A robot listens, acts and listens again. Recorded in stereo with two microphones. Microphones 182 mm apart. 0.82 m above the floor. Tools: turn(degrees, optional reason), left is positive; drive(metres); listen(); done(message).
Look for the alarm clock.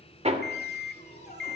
turn(degrees=70, reason="The alarm clock: about 70° left or 110° left.")
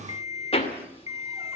turn(degrees=40, reason="So it is at 40° left.")
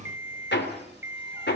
turn(degrees=-15, reason="The alarm clock is now 15° right.")
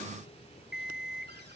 done("Facing the alarm clock, 1 to 2 m away.")